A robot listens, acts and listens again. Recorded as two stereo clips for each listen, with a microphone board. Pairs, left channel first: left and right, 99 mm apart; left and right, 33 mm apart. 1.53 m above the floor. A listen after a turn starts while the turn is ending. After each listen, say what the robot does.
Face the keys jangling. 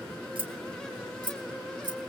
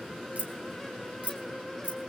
Turn 50° right.
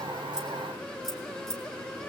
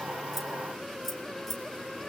Facing the keys jangling, 2 to 4 m away.